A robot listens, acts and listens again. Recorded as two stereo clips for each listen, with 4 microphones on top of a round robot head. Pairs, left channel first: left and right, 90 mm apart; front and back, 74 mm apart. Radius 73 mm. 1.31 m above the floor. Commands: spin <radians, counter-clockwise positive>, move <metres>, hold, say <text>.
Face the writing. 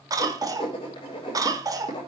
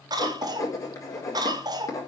spin 0.79
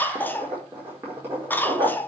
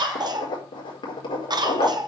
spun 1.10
spin -0.35
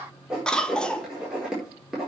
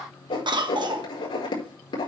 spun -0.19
spin -0.17
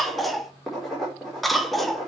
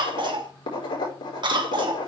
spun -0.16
say Facing the writing, over 4 m away.